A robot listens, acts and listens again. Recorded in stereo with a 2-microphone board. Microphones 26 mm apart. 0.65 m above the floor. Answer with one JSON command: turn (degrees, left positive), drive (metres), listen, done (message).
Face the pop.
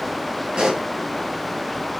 {"turn": -30}
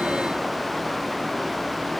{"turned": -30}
{"listen": true}
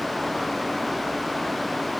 {"done": "I heard a pop, but can't make it out now. It was about straight ahead or 120° right."}